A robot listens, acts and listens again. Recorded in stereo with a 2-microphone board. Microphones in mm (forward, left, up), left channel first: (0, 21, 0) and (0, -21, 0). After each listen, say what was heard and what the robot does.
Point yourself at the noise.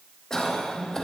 Turn 30° left.
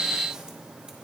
Keep listening.
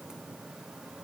Keep listening.
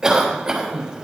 So it is at 20° right. Turn 20° right.
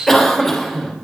Found it: a cough, straight ahead, 2 to 4 m away.